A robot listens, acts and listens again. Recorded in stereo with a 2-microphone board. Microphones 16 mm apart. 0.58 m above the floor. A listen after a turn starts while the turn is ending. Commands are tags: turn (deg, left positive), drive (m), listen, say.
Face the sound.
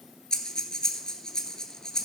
<turn deg="50"/>
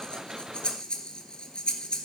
<turn deg="80"/>
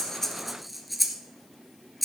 <say>Found it: breathing, straight ahead.</say>